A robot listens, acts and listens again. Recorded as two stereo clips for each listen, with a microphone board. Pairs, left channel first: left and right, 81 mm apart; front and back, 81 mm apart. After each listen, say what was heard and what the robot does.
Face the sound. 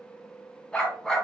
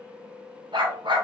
The dog barking: 175° left. Turn 175° left.
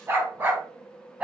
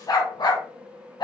The dog barking is now 15° right. Turn 15° right.
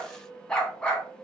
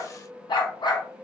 The dog barking is now 15° left. Turn 15° left.
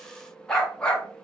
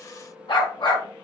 The dog barking is now 10° left. Turn 10° left.
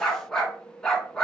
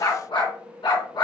The dog barking is now 10° left. Turn 10° left.
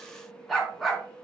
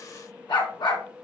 Facing the dog barking.